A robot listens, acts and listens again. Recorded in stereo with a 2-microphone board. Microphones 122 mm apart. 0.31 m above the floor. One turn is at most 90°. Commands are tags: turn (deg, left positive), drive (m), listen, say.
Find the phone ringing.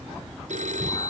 <turn deg="-90"/>
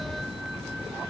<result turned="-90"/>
<listen/>
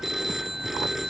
<say>Facing the phone ringing.</say>